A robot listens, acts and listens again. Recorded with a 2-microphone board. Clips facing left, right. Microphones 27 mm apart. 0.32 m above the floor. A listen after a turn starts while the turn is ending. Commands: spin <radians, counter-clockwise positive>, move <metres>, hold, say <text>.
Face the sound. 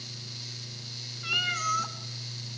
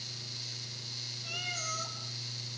spin 1.13
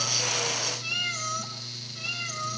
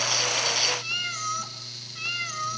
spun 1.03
spin -0.26
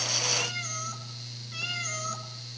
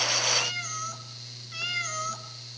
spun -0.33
spin -0.17
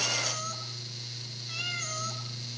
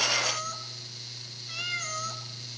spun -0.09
say Facing the cat meowing, 2 to 4 m away.